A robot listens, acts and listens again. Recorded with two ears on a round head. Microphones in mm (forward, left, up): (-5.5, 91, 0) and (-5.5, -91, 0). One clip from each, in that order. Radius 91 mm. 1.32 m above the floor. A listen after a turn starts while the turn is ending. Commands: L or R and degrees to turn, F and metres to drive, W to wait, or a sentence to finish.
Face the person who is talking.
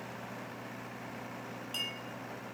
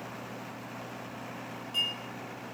W
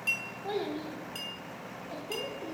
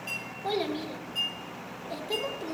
R40
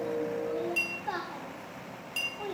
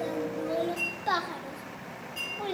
R95
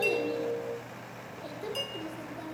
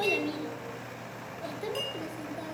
R10
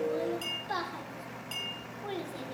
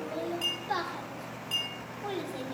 Found it: a child speaking, straight ahead, 1 to 2 m away.